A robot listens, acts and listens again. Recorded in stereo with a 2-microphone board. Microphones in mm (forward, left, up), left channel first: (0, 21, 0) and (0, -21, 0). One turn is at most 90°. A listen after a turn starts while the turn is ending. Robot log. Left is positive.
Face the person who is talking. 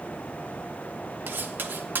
cmd idle
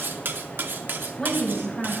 cmd yaw +30
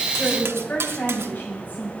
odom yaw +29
note: So it is at 140° left.
cmd yaw +90
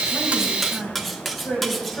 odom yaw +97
note: The woman speaking is now 45° left.
cmd yaw +45
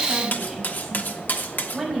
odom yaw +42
end: Found it: a woman speaking, straight ahead, over 4 m away.